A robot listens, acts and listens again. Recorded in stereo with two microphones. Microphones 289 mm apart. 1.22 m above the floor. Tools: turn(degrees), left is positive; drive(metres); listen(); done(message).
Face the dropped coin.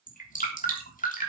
listen()
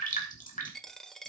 turn(degrees=30)
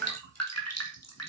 listen()
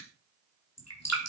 done("I heard a dropped coin, but can't make it out now. It was about 30° right or 150° left.")